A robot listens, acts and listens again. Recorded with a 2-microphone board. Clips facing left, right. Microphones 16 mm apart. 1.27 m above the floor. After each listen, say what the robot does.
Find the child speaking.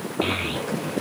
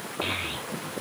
Turn 30° left.
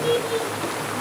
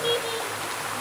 Turn 15° right.
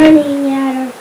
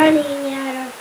Facing the child speaking, 1 to 2 m away.